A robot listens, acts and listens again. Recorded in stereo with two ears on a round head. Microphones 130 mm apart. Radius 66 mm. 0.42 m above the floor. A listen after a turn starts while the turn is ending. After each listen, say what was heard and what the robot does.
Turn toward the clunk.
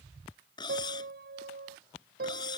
Keep listening.
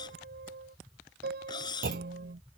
The clunk: about 70° right or 110° right. Turn 70° right.
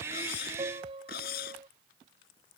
Keep listening.
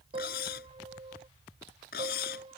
I heard a clunk, but can't make it out now. It was about straight ahead or 40° right.